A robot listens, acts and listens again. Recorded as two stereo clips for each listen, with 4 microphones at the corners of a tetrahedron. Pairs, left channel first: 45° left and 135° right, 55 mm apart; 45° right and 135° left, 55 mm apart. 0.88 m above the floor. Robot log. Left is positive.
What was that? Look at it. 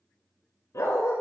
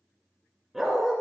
note: The dog barking: 50° left.
cmd yaw +50
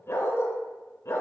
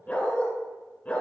note: The dog barking is now 20° left.
cmd yaw +20
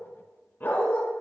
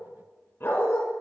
end: Found it: a dog barking, straight ahead.